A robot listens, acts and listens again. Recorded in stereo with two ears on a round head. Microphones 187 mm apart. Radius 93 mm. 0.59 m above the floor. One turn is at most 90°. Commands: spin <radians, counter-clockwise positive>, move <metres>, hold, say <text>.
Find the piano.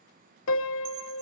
spin 1.22
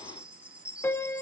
spin 0.17
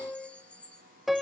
say Facing the piano, under 1 m away.